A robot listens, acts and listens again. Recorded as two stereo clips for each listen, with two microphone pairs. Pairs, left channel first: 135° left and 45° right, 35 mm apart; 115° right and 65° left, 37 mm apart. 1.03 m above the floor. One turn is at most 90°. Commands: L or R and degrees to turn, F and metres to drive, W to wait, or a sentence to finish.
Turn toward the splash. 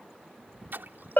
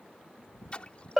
R60
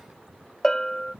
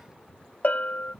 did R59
Facing where the splash came from. I can't hear it now.